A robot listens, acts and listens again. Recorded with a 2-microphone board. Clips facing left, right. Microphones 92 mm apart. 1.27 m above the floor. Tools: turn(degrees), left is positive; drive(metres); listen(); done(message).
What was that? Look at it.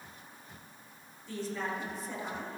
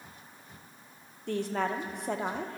turn(degrees=-65)
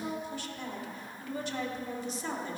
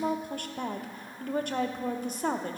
turn(degrees=-50)
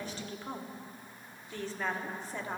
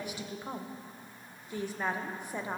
turn(degrees=-15)
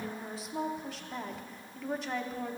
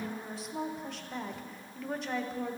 done("Facing the woman speaking.")